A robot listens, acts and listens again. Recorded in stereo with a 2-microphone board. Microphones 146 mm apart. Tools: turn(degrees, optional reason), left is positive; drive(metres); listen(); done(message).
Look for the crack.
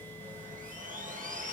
listen()
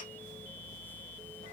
listen()
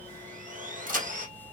turn(degrees=-70, reason="The crack: about 70° right or 110° right.")
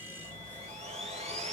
listen()
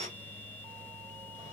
done("I heard a crack, but can't make it out now. It was about straight ahead or 40° right.")